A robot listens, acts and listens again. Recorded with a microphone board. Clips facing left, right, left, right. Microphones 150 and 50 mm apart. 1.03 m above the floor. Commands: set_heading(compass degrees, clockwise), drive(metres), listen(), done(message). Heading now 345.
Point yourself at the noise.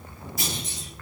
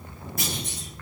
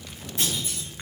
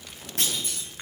set_heading(40)
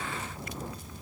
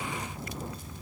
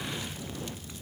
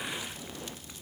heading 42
listen()
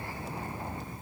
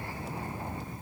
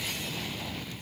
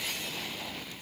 done("I heard a clunk, but can't make it out now. It was about straight ahead or 65° right.")